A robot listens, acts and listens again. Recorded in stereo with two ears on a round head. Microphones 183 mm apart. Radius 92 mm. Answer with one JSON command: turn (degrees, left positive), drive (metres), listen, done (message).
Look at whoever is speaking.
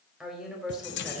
{"turn": -30}
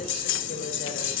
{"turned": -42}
{"listen": true}
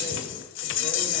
{"listen": true}
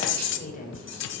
{"turn": 40}
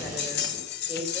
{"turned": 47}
{"done": "Found it: a woman speaking, straight ahead."}